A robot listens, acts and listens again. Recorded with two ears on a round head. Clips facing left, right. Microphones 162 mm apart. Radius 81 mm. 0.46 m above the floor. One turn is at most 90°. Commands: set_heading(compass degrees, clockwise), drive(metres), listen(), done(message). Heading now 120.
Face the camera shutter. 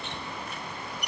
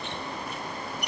listen()
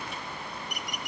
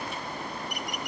listen()
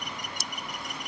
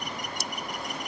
done("I can't make out a camera shutter to turn to.")